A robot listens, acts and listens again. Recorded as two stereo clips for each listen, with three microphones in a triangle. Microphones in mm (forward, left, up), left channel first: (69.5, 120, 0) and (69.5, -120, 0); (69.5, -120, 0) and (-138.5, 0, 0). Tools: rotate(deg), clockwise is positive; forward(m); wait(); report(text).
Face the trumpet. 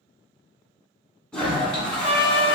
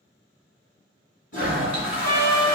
rotate(-45)
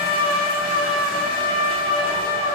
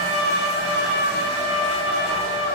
report("Facing the trumpet.")